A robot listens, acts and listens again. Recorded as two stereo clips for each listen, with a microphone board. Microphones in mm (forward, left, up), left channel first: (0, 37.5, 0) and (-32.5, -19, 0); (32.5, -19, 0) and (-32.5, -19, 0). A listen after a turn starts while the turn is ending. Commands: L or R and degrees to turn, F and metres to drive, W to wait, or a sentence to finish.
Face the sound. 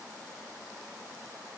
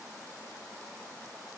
W
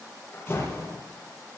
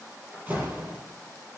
L120
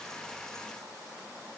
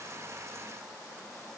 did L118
Facing where the door slam came from. I can't hear it now.